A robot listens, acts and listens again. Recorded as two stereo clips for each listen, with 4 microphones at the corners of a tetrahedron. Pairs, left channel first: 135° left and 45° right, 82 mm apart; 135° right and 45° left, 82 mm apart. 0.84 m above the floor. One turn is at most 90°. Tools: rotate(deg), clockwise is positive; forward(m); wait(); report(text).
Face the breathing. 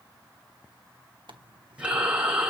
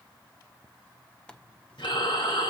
rotate(90)
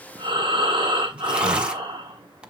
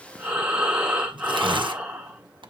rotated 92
rotate(30)
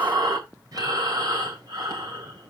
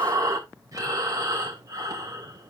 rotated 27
report("Found it: breathing, straight ahead, 2 to 4 m away.")